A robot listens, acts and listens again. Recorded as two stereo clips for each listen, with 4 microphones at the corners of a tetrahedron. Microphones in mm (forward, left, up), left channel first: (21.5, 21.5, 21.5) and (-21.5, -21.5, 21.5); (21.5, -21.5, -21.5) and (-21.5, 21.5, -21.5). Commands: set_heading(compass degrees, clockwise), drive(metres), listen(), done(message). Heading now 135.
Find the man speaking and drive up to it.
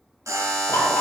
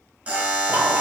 listen()
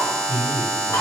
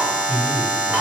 set_heading(100)
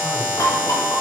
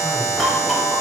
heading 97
listen()
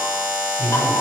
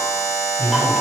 drive(1.0)
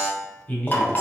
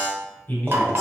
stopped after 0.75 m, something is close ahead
done("Arrived at the man speaking, straight ahead.")